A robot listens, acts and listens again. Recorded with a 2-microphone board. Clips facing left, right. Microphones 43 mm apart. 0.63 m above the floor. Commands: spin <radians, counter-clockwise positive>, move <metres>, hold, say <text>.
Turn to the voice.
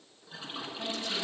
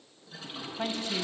spin -0.44
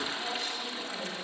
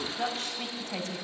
spin -2.27
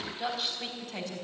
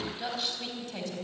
say Facing the woman speaking, over 4 m away.